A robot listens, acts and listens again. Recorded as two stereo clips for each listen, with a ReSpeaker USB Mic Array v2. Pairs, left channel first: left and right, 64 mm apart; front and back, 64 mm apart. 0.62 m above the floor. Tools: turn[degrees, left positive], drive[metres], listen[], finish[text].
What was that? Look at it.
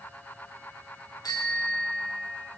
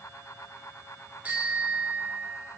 Thought: The bicycle bell: 110° left.
Action: turn[110]
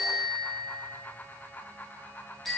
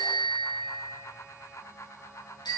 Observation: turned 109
Action: finish[Found it: a bicycle bell, straight ahead, over 4 m away.]